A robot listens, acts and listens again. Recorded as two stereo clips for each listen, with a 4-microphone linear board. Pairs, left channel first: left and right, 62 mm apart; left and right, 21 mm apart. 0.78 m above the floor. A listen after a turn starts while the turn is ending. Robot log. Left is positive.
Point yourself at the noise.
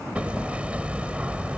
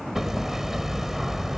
note: The hammering: about 20° right or 160° right.
cmd yaw -20
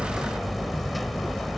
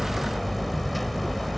end: Found it: hammering, straight ahead.